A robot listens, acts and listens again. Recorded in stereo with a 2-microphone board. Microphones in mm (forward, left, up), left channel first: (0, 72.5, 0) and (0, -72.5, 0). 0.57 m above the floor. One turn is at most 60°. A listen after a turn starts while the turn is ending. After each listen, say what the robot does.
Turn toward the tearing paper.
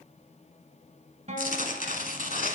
Turn 60° left.
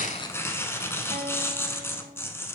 Turn 15° left.
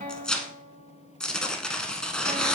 Facing the tearing paper, under 1 m away.